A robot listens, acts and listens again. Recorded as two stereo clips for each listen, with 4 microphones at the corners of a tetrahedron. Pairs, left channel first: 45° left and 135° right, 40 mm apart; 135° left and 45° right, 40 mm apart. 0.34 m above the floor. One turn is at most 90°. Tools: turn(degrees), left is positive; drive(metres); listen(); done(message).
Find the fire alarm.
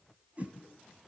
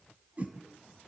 listen()
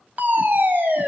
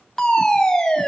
turn(degrees=-90)
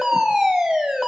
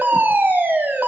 turn(degrees=-55)
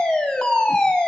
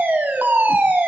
turn(degrees=-20)
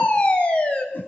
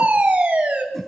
done("Facing the fire alarm.")